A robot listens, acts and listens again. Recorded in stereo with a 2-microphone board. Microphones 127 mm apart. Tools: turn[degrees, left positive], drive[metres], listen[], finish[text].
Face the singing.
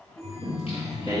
Thought: The singing: about 45° left or 135° left.
Action: turn[45]
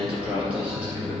Thought: So it is at 10° right.
Action: turn[-10]
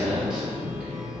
Thought: The singing is now 10° right.
Action: turn[-10]
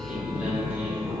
Thought: The singing is now 15° right.
Action: turn[-15]
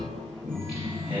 Thought: The singing is now 15° right.
Action: turn[-15]
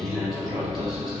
Action: finish[Facing the singing, 2 to 4 m away.]